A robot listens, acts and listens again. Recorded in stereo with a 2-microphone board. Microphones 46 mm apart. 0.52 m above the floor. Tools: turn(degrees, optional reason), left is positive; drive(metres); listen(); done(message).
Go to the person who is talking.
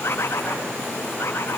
listen()
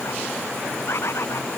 listen()
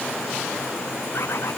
done("I can't make out anyone speaking to turn to.")